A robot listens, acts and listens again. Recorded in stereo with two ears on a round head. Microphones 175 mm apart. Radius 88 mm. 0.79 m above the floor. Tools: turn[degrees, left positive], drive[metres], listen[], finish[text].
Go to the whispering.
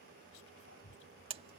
Thought: The whispering: about 75° left or 105° left.
Action: turn[75]
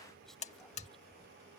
Action: drive[1.0]
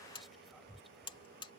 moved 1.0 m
Action: drive[1.0]
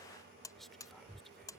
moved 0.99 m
Action: drive[1.0]
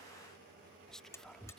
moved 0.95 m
Action: drive[1.0]
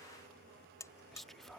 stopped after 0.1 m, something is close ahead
Action: finish[I am next to the whispering.]